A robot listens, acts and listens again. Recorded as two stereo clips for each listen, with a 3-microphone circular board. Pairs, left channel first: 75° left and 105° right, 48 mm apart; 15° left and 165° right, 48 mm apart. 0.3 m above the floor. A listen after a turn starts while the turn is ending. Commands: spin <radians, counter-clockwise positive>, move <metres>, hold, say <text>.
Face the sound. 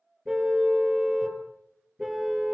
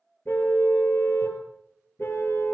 spin -0.35
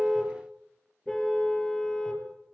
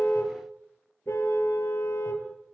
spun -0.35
say Found it: a car horn, straight ahead, 2 to 4 m away.